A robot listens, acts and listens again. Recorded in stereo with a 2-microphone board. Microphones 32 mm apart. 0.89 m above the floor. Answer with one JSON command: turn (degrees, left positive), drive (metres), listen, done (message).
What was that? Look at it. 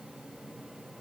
{"listen": true}
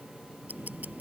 {"turn": -65}
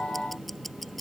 {"done": "Facing the ticking."}